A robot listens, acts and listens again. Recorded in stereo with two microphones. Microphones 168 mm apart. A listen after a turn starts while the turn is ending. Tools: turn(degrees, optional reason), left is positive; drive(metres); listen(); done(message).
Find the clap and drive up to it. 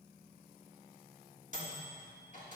listen()
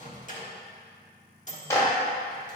turn(degrees=15, reason="The clap: about 15° left or 165° left.")
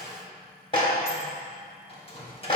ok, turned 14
turn(degrees=150, reason="So it is at 150° left.")
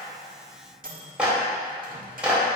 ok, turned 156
drive(metres=1.0)
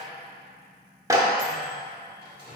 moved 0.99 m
turn(degrees=-20, reason="The clap is now 20° right.")
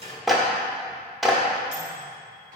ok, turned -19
drive(metres=1.0)
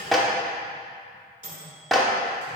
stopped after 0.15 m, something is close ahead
done("I am next to the clap.")